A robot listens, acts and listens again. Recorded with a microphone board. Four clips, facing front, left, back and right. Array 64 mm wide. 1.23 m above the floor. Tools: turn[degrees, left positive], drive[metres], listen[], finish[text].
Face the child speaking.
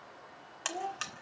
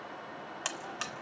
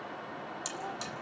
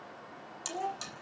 Thought: The child speaking: 50° right.
Action: turn[-50]
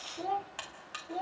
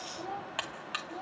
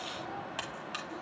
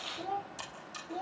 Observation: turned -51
Thought: The child speaking is now 15° right.
Action: turn[-15]
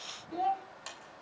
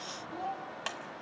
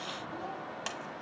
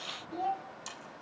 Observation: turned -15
Thought: The child speaking is now 15° right.
Action: turn[-15]
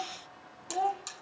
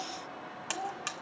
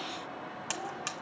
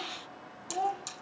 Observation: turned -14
Thought: The child speaking is now 25° right.
Action: turn[-25]
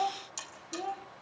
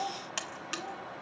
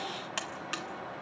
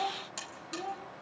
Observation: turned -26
Thought: The child speaking is now 20° right.
Action: turn[-20]
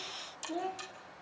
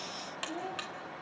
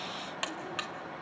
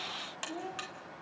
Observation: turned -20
Action: finish[Facing the child speaking.]